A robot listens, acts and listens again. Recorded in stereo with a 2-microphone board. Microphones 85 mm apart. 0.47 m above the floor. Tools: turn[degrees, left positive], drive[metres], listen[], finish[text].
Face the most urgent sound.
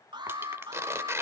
Thought: The alarm: about 70° right or 110° right.
Action: turn[-70]
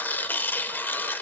Action: listen[]
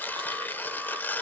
Action: listen[]
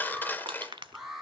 Action: finish[Found it: an alarm, straight ahead.]